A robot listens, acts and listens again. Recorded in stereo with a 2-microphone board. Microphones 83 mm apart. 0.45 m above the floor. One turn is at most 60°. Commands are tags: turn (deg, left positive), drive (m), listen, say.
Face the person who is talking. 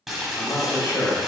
<turn deg="60"/>
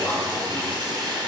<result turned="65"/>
<turn deg="35"/>
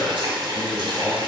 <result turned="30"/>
<say>Facing the man speaking.</say>